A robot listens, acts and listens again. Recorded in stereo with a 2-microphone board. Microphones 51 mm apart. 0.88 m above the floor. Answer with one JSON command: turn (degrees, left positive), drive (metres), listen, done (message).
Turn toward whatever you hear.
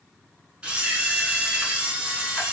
{"turn": -15}
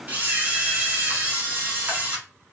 {"turn": -150}
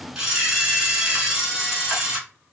{"turn": -15}
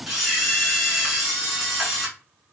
{"done": "Found it: a camera shutter, straight ahead, 1 to 2 m away."}